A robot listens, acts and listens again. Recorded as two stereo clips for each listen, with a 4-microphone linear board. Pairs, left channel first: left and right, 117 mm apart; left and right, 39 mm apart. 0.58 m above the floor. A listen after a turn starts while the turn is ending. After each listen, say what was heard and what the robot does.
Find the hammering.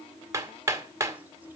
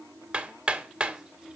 The hammering: about 25° right or 155° right. Turn 25° right.
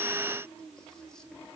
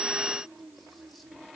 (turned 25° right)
Keep listening.
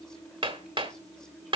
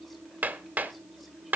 So it is at 130° right. Turn 130° right.
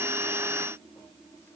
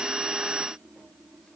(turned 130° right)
Keep listening.
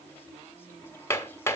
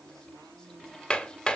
The hammering is now 25° left. Turn 25° left.
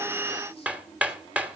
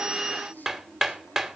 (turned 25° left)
The hammering is now 15° right. Turn 15° right.
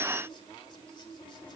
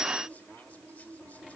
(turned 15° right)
Keep listening.
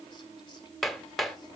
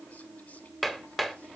Facing the hammering.